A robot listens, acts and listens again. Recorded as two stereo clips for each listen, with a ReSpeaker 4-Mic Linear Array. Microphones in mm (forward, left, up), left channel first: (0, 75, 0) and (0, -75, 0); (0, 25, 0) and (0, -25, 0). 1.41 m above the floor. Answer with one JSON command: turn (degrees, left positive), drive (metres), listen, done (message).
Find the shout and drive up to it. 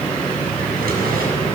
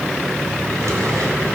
{"listen": true}
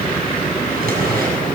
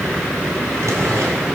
{"listen": true}
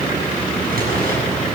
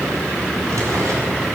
{"done": "I can't make out a shout, only a drawer."}